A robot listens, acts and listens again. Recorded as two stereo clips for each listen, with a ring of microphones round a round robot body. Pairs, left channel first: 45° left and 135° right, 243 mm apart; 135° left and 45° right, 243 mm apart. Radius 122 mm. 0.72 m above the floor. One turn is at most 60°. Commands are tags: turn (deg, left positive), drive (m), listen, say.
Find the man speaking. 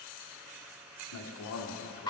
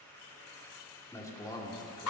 <turn deg="60"/>
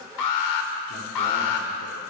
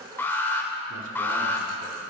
<listen/>
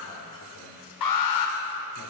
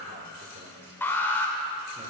<listen/>
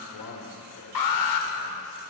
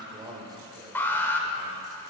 <turn deg="30"/>
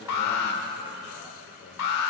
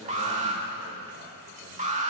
<listen/>
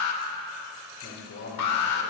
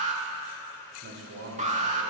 <say>Found it: a man speaking, straight ahead, 2 to 4 m away.</say>